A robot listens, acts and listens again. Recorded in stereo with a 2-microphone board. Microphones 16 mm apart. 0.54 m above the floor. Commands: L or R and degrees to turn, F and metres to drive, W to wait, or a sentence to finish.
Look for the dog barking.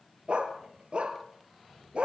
R90
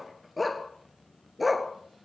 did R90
R10
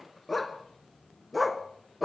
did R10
R10
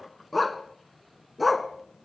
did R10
Facing the dog barking, 1 to 2 m away.